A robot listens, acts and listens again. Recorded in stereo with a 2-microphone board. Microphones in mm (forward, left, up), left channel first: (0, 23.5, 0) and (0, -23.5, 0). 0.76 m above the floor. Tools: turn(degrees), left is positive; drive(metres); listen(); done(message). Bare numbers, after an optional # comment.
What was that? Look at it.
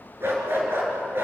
# The dog barking: about 50° right or 130° right.
turn(-50)
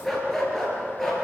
done("Found it: a dog barking, straight ahead.")